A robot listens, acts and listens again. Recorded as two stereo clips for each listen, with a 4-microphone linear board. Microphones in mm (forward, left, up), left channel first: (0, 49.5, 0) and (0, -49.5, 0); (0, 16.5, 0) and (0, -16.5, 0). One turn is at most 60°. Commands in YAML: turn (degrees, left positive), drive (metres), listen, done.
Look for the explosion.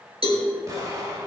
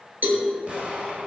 turn: -35
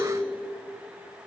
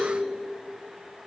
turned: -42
listen: true
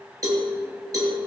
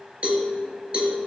done: "I heard an explosion, but can't make it out now. It was about 5° left or 105° right."